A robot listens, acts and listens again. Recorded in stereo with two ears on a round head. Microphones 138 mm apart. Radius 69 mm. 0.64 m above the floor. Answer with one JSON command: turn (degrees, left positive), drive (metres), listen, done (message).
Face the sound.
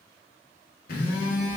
{"turn": 65}
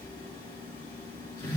{"turn": 30}
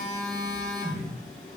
{"turn": 10}
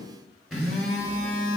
{"done": "Facing the phone buzzing."}